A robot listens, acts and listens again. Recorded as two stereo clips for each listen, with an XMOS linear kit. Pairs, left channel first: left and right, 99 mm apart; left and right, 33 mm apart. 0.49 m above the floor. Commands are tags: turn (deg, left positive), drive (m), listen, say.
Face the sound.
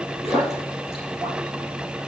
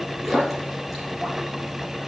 <turn deg="-30"/>
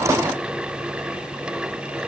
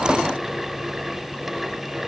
<listen/>
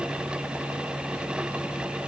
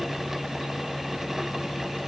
<say>I heard a splash, but can't make it out now. It was about 25° left or 145° right.</say>